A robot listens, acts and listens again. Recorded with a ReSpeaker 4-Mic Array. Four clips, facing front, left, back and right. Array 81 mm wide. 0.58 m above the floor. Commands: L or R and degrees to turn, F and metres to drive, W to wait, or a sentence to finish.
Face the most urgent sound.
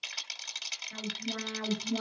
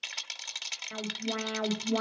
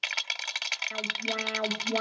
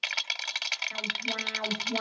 L155
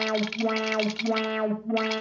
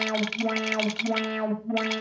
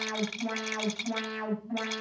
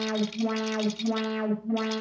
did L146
Found it: an alarm, straight ahead.